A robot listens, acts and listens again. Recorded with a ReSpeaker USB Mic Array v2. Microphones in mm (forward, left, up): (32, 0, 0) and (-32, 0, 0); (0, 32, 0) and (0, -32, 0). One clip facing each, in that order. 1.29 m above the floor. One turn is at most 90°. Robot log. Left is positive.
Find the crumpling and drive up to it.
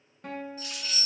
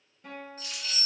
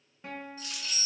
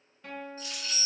note: The crumpling: 55° left.
cmd yaw +55
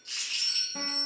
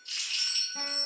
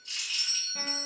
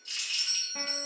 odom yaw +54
cmd fwd 1.0
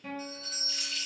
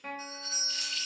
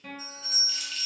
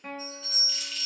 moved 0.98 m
cmd fwd 1.0
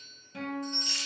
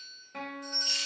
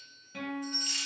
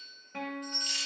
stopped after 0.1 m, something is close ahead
cmd idle
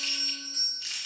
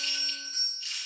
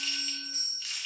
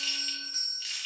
end: Arrived at the crumpling, straight ahead.